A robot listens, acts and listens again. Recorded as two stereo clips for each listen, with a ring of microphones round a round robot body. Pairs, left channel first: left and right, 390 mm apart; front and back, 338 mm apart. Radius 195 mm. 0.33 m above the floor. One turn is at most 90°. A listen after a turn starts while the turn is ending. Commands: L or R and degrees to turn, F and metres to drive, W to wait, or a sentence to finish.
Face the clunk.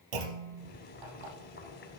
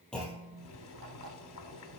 R90
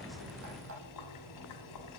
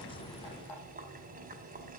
I heard a clunk from this way, but can't make it out now.